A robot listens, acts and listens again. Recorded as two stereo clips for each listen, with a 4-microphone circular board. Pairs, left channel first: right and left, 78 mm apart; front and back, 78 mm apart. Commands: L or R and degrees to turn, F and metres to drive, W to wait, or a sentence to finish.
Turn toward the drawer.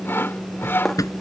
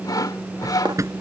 R135
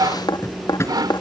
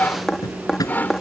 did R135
R35
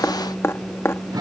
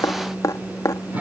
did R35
W
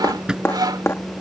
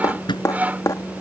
L10
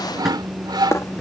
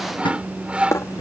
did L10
Facing the drawer.